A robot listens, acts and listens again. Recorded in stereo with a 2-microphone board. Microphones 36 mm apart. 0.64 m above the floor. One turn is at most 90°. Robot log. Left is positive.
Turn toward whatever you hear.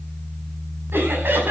cmd yaw -90
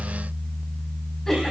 cmd idle
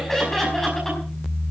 note: The laughter is now 10° left.
cmd yaw +10
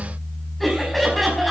end: Facing the laughter, over 4 m away.